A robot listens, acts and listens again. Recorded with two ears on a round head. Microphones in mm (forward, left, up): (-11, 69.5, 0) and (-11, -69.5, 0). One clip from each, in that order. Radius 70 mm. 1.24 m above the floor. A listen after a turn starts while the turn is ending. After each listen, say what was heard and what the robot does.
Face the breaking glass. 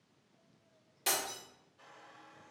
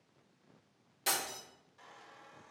Turn 30° left.
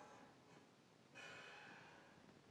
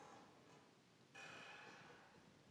Keep listening.
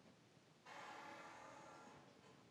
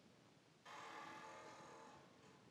I heard breaking glass, but can't make it out now. It was about 20° right or 140° left.